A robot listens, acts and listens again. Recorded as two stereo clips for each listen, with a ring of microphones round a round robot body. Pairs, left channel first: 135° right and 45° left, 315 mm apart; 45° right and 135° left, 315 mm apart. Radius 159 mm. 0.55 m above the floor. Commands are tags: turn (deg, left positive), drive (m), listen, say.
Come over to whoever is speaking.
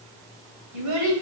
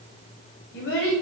<turn deg="10"/>
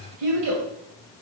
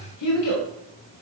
<drive m="1.0"/>
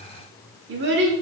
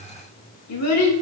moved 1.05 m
<turn deg="-10"/>
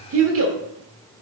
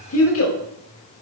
<drive m="1.0"/>
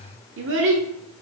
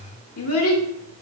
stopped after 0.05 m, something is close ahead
<say>Arrived at the child speaking, straight ahead.</say>